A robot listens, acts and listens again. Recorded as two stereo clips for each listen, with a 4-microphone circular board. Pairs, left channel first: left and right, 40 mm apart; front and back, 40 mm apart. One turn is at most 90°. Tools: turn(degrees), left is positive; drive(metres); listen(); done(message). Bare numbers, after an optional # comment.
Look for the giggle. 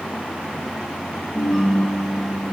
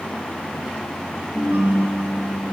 listen()
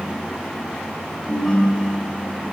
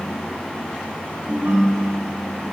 listen()
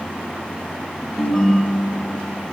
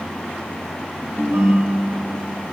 done("I can't make out a giggle to turn to.")